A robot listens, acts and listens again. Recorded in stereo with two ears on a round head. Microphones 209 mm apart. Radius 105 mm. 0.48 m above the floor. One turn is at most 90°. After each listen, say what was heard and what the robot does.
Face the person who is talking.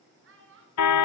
The child speaking: about 55° right or 125° right. Turn 55° right.
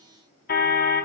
Keep listening.
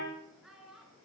Facing the child speaking.